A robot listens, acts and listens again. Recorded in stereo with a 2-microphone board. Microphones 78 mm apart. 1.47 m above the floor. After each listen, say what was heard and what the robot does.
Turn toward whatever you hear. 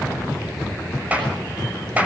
The clap: about 20° right or 160° right. Turn 20° right.
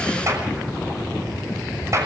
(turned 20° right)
So it is at 140° right. Turn 140° right.
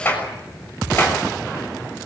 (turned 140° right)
The clap is now 25° left. Turn 25° left.
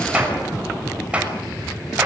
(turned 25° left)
The clap is now 15° right. Turn 15° right.
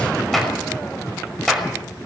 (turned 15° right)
Found it: a clap, straight ahead, over 4 m away.